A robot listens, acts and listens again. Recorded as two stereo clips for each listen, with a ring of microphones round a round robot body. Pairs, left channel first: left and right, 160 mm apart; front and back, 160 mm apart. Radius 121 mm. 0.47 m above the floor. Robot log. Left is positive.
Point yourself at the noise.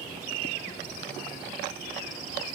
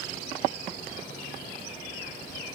cmd idle
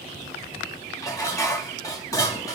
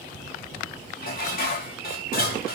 note: The dishes clattering: 20° left.
cmd yaw +20
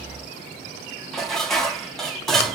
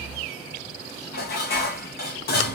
end: Found it: dishes clattering, straight ahead, 1 to 2 m away.